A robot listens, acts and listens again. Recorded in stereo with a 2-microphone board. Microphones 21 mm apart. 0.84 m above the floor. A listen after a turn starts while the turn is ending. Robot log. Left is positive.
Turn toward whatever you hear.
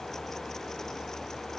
cmd idle
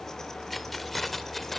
note: The keys jangling: about 15° left or 165° left.
cmd yaw +15
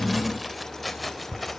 cmd yaw +30
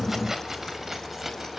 note: So it is at 10° right.
cmd yaw -10
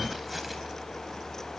cmd idle
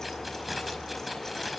end: Found it: keys jangling, straight ahead, over 4 m away.